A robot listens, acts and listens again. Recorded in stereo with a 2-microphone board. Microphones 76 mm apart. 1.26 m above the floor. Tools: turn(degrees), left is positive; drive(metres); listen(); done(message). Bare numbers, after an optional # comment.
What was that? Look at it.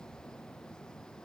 listen()
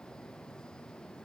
listen()
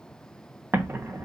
# The explosion: about 30° right or 150° right.
turn(-30)
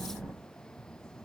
done("Facing the explosion.")